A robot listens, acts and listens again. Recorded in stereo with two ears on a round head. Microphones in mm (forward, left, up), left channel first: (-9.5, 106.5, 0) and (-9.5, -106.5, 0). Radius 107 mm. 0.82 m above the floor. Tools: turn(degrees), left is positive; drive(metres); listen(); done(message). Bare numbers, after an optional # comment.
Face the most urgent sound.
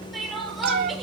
turn(30)
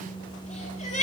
# So it is at 150° left.
turn(150)
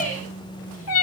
# The crying is now 35° left.
turn(35)
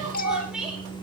done("Facing the crying.")